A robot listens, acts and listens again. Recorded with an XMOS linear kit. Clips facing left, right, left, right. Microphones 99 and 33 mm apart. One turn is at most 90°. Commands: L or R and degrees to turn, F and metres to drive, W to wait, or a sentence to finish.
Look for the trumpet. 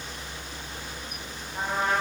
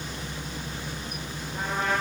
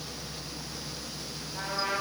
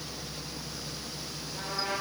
L25
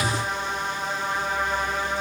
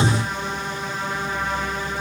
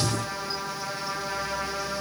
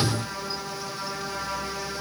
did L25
L90
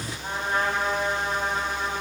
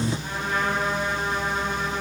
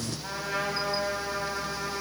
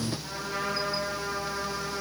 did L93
L35
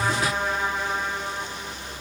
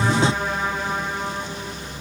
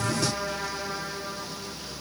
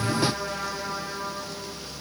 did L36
Found it: a trumpet, straight ahead, over 4 m away.